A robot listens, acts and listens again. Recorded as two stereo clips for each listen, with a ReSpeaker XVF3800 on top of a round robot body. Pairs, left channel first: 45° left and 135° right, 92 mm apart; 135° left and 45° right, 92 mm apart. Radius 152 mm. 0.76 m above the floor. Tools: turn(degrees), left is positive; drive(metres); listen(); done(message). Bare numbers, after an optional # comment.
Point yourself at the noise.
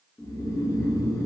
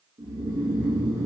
done("Facing the snoring, 1 to 2 m away.")